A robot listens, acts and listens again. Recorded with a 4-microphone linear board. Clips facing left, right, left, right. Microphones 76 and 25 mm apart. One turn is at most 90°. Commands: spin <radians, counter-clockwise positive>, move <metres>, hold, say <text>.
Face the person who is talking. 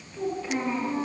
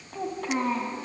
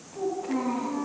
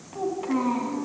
spin -1.05
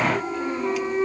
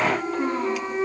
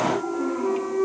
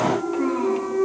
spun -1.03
hold
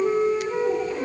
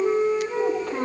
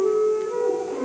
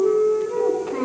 hold
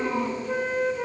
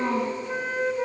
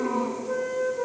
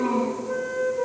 spin -1.22
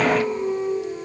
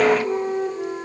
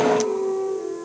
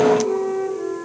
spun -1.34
hold
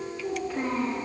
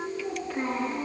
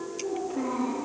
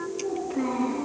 say Found it: a child speaking, straight ahead, over 4 m away.